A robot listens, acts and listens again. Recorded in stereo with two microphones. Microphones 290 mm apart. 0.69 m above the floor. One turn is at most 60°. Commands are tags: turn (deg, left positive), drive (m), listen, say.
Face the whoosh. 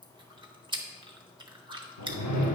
<turn deg="60"/>
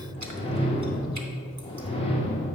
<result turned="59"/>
<turn deg="20"/>
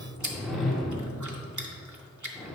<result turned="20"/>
<say>Found it: a whoosh, straight ahead, under 1 m away.</say>